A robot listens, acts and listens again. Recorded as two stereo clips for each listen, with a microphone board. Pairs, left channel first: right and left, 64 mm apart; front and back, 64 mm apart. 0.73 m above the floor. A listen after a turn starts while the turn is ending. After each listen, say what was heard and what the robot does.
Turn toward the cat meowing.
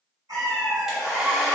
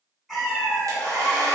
The cat meowing: 95° left. Turn 95° left.
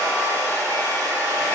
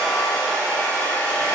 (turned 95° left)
Keep listening.
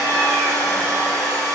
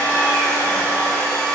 Keep listening.
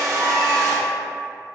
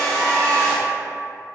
Facing where the cat meowing came from. I can't hear it now.